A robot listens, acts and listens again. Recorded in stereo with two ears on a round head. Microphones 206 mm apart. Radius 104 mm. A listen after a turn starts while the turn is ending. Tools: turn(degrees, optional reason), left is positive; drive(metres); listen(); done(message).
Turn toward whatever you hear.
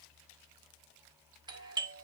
turn(degrees=-20, reason="The doorbell: about 20° right or 160° right.")
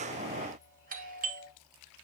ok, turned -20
turn(degrees=-135, reason="So it is at 135° right.")
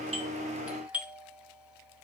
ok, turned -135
done("Found it: a doorbell, straight ahead.")